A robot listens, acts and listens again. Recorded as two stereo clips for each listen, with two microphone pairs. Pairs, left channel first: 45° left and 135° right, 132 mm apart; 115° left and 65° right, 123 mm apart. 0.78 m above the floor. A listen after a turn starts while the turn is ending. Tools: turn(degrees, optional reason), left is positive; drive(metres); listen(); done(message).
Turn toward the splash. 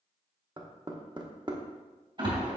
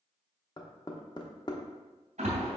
turn(degrees=-85, reason="The splash: 85° right.")
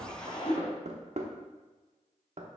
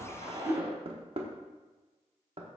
done("Found it: a splash, straight ahead.")